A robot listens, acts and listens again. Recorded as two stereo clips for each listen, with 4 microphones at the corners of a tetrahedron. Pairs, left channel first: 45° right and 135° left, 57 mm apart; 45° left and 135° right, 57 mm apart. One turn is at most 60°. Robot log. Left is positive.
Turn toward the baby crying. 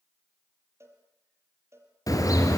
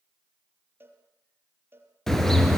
cmd idle
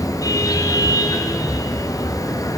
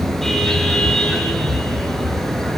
cmd idle
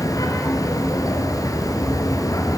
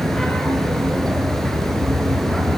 end: I can't make out a baby crying to turn to.